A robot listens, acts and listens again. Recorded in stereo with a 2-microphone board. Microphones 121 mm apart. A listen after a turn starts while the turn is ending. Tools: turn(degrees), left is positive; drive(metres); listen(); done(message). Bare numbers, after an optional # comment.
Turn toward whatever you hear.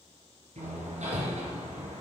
turn(-90)
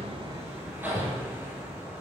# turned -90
# So it is at 15° right.
turn(-15)
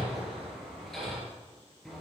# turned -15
done("Facing the hammering, 2 to 4 m away.")